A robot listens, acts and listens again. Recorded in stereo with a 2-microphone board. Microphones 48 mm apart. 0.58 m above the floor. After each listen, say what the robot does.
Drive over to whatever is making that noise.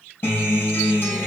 Turn 45° left.
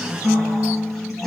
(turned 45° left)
Drive 1.0 m forward.
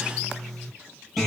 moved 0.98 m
Drive 1.0 m forward.
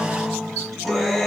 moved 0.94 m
Drive 1.0 m forward.
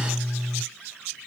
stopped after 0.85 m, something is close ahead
Arrived at the guitar, straight ahead.